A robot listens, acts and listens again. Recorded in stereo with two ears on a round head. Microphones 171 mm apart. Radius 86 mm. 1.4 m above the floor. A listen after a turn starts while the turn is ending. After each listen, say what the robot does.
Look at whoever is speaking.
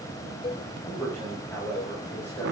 Turn 30° left.
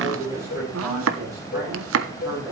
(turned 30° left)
Turn 20° right.
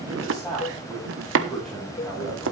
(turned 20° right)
Found it: a man speaking, straight ahead.